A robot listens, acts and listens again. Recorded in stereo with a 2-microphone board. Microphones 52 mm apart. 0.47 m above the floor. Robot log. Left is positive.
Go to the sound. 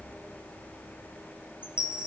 note: The chime: about 20° right or 160° right.
cmd yaw -20
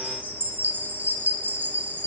note: So it is at 135° right.
cmd yaw -135
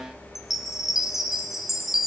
cmd fwd 1.0
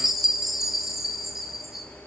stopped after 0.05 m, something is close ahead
end: Blocked. The chime is further on, straight ahead.